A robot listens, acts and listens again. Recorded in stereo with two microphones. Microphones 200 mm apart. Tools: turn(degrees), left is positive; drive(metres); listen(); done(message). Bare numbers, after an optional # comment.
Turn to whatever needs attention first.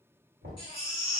# The baby crying: about 25° left or 155° left.
turn(25)
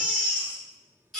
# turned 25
done("Found it: a baby crying, straight ahead, 1 to 2 m away.")